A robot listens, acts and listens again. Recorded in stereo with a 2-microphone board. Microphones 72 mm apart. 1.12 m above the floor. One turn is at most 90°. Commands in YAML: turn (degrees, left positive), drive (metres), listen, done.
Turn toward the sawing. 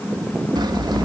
turn: -90
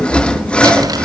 turn: 15
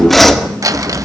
done: "Found it: sawing, straight ahead."